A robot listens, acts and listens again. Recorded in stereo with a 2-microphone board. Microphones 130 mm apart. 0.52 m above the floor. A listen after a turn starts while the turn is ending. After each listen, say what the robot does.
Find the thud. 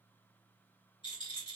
Keep listening.
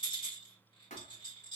Turn 90° left.
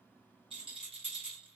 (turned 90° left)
I heard a thud from this way, but can't make it out now.